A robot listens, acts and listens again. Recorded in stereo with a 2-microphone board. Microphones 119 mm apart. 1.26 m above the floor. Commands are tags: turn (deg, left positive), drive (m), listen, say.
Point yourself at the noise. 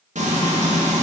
<turn deg="-90"/>
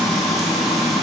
<say>Facing the frying.</say>